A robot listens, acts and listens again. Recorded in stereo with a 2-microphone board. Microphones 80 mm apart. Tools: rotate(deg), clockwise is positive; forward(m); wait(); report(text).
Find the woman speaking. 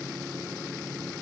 wait()
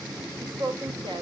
rotate(90)
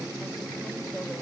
wait()
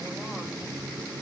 wait()
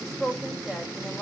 report("Facing the woman speaking, 2 to 4 m away.")